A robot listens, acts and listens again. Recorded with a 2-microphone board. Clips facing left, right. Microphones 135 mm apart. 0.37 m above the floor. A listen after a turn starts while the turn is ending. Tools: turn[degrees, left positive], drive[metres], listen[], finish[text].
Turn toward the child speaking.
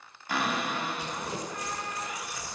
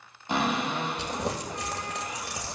Action: listen[]
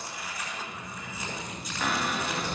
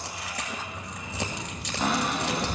Action: turn[30]
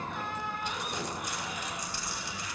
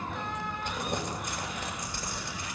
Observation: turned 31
Action: finish[Found it: a child speaking, straight ahead.]